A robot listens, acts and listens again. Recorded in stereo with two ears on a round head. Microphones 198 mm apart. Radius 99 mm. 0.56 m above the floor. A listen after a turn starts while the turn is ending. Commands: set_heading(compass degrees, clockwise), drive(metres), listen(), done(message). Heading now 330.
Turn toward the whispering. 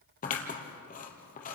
listen()
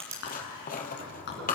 set_heading(280)
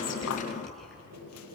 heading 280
listen()
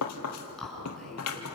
done("Found it: whispering, straight ahead.")